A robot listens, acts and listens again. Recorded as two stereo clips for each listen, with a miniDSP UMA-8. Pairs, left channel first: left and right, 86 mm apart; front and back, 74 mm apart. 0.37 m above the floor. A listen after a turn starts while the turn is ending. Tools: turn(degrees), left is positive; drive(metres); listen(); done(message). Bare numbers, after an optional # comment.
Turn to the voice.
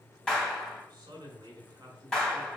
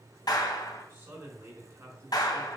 # The man speaking: 125° right.
turn(-125)
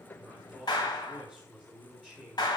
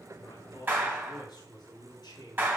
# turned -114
# The man speaking is now 15° right.
turn(-15)
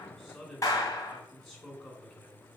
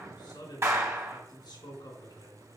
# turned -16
done("Found it: a man speaking, straight ahead, 2 to 4 m away.")